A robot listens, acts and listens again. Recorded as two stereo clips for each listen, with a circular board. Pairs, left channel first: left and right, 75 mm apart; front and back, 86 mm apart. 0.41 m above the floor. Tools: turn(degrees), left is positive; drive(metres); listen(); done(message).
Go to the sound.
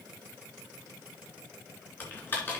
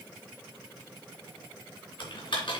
turn(degrees=25)
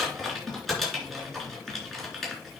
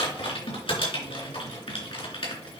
drive(metres=1.0)
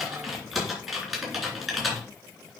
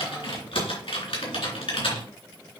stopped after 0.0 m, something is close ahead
done("Blocked. The typing on a keyboard is further on, straight ahead.")